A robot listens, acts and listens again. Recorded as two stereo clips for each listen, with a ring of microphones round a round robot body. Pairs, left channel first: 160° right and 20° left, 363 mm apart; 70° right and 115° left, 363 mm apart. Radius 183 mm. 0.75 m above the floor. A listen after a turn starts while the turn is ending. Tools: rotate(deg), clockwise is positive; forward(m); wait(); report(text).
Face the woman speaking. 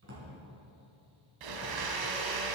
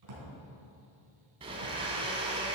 wait()
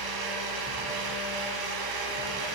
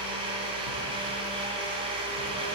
wait()
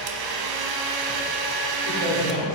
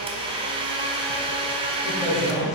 rotate(-15)
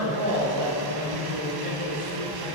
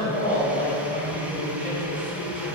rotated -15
report("Found it: a woman speaking, straight ahead.")